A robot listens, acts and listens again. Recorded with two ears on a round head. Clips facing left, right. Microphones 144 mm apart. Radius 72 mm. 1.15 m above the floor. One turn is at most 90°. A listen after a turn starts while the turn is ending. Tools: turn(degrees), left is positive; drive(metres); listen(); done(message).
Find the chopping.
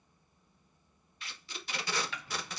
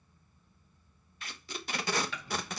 turn(degrees=-90)
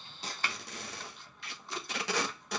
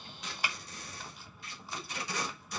listen()
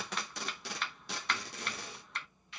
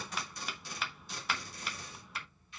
done("Facing the chopping.")